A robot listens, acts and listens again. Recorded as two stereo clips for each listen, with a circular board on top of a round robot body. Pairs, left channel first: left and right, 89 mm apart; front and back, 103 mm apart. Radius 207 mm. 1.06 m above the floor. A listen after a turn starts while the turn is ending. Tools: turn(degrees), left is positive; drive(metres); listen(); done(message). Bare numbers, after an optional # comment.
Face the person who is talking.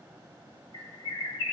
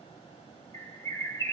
listen()
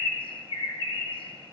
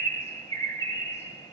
listen()
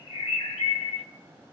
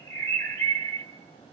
done("I can't make out anyone speaking to turn to.")